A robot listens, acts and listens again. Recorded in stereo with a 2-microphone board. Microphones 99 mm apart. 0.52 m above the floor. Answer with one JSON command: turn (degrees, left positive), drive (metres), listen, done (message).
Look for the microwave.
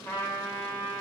{"listen": true}
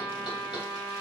{"listen": true}
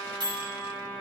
{"turn": -50}
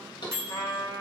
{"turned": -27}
{"turn": -35}
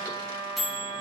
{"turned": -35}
{"done": "Facing the microwave, 1 to 2 m away."}